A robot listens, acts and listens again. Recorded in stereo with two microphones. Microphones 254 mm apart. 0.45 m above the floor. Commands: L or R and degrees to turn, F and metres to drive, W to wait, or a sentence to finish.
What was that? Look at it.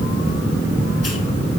W
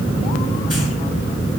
W
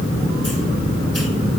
I can't make out anything.